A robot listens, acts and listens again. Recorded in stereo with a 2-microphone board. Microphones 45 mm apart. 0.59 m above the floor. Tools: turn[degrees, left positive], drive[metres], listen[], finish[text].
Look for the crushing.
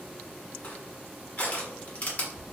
Thought: The crushing: about 30° left or 150° left.
Action: turn[30]
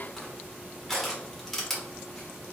Action: finish[Found it: crushing, straight ahead.]